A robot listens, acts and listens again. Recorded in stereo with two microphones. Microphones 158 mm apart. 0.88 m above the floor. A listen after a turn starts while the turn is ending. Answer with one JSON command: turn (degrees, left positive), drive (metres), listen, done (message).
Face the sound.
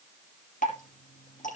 {"turn": 55}
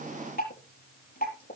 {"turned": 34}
{"turn": 90}
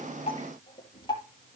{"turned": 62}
{"turn": 25}
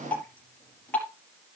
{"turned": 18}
{"turn": 10}
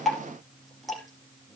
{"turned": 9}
{"done": "Found it: dripping, straight ahead."}